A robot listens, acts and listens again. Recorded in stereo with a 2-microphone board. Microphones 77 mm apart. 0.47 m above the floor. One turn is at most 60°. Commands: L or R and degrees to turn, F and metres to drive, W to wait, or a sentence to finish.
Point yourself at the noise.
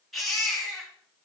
L30
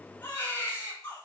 L60
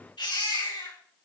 L60
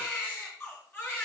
L30
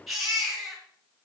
Found it: a baby crying, straight ahead.